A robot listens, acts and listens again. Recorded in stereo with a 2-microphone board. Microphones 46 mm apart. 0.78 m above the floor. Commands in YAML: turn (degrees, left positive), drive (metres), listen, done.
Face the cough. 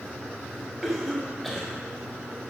turn: 30
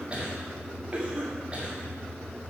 turn: -30
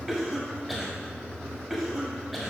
done: "Facing the cough, 1 to 2 m away."